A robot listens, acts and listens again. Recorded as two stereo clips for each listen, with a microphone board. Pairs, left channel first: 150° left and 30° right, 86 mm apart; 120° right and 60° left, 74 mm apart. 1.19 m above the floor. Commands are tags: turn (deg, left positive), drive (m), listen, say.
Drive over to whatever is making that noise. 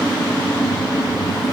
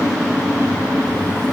<listen/>
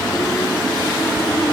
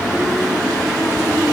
<listen/>
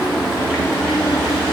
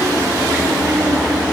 <say>I can't make out anything to turn to.</say>